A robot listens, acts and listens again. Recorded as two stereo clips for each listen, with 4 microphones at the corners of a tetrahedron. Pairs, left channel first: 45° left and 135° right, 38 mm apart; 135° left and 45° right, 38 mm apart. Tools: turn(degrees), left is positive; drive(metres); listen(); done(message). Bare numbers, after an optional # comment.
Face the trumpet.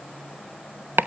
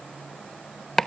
listen()
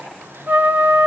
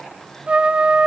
# The trumpet: 105° right.
turn(-105)
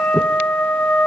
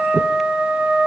done("Facing the trumpet.")